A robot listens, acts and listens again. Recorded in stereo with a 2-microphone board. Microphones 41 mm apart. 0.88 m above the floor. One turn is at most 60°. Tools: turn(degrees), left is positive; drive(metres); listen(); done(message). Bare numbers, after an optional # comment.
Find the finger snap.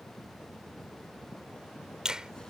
# The finger snap: about 15° right or 165° right.
turn(-15)
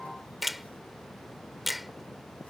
done("Facing the finger snap.")